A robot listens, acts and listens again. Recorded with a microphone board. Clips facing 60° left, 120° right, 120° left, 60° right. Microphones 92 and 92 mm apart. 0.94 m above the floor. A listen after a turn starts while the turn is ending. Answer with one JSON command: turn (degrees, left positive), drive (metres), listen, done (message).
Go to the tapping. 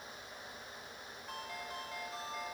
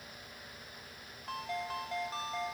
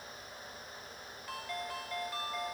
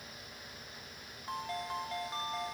{"listen": true}
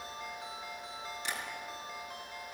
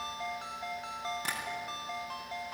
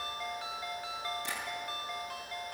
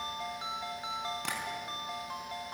{"turn": -80}
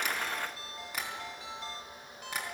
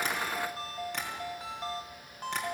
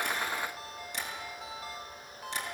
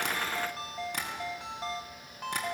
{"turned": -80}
{"turn": -25}
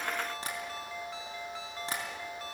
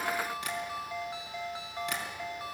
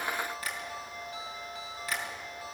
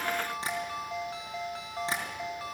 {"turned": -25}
{"drive": 1.0}
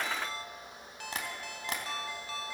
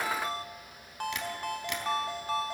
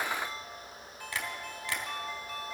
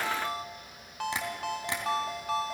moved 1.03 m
{"turn": 10}
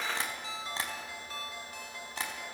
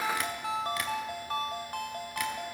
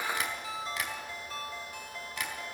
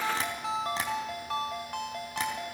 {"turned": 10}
{"listen": true}
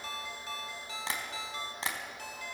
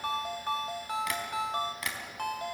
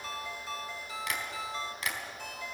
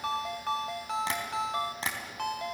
{"drive": 1.0}
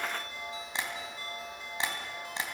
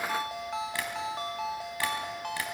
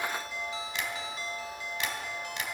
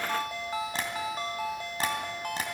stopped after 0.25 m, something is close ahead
{"turn": -10}
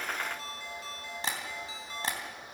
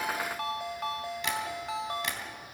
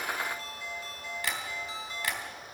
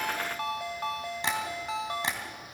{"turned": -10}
{"done": "Blocked. The tapping is further on, straight ahead."}